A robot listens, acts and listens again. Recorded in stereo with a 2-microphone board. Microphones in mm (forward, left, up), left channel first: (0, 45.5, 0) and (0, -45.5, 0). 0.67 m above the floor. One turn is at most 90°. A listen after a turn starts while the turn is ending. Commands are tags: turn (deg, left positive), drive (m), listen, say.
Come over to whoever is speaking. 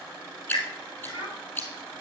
<turn deg="90"/>
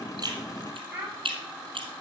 <turn deg="-15"/>
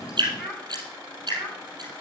<drive m="1.0"/>
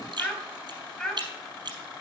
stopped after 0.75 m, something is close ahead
<say>Blocked. The child speaking is further on, straight ahead.</say>